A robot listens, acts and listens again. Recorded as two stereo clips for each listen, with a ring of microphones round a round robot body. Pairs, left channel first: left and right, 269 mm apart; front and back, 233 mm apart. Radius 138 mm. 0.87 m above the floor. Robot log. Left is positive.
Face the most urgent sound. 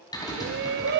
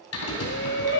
note: The shout: 40° right.
cmd yaw -40
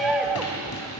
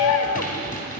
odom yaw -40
end: Facing the shout, under 1 m away.